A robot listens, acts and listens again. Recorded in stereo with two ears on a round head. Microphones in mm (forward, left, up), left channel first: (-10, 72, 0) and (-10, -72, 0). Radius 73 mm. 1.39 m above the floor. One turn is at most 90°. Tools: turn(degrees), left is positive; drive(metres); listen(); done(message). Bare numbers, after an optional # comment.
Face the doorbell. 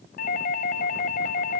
# The doorbell: about 55° left or 125° left.
turn(55)
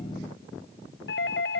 # So it is at 70° left.
turn(70)
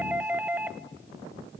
# The doorbell is now 10° right.
turn(-10)
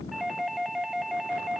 done("Facing the doorbell.")